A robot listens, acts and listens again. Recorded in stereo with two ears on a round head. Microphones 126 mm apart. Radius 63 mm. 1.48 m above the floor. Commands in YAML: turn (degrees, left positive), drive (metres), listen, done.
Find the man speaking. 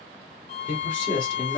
turn: 35
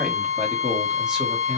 done: "Facing the man speaking."